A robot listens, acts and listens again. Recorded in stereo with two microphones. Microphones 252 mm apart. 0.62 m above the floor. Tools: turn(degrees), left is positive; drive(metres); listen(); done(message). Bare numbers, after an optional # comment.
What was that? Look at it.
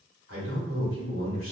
# The man speaking: about 60° right or 120° right.
turn(-60)
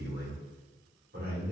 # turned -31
# So it is at 50° right.
turn(-50)
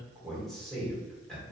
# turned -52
done("Found it: a man speaking, straight ahead.")